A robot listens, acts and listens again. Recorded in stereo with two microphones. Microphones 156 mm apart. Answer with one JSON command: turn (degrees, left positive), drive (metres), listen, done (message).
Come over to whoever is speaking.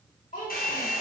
{"turn": 60}
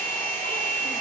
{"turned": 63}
{"listen": true}
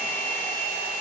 {"listen": true}
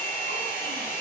{"done": "I heard a child speaking, but can't make it out now. It was about 5° right or 60° left. I did not reach it."}